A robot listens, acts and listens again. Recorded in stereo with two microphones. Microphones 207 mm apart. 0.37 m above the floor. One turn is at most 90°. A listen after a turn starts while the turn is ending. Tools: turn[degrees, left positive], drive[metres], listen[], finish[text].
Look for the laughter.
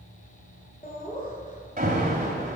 Thought: The laughter: about 40° left or 140° left.
Action: turn[40]
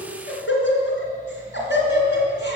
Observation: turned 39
Thought: So it is at 125° left.
Action: turn[90]
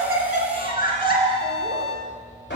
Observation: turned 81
Thought: The laughter is now 50° left.
Action: turn[50]
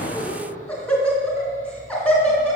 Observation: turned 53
Action: finish[Found it: laughter, straight ahead.]